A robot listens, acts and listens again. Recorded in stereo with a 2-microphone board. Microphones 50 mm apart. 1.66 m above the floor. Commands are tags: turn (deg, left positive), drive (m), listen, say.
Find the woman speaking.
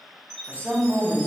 <turn deg="-40"/>
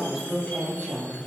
<turn deg="15"/>
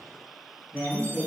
<turn deg="15"/>
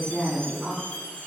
<say>Found it: a woman speaking, straight ahead, 2 to 4 m away.</say>